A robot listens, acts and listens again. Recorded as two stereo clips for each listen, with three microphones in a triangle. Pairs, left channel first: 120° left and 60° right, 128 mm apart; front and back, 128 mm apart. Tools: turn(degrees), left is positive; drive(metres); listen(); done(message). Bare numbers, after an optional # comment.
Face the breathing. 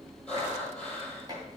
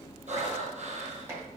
# The breathing: 155° right.
turn(-155)
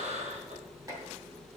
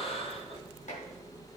# The breathing is now 40° right.
turn(-40)
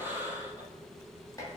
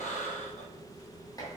# The breathing is now 15° left.
turn(15)
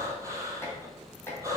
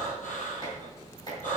# The breathing is now 10° left.
turn(10)
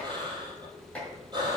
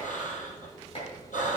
done("Found it: breathing, straight ahead, 2 to 4 m away.")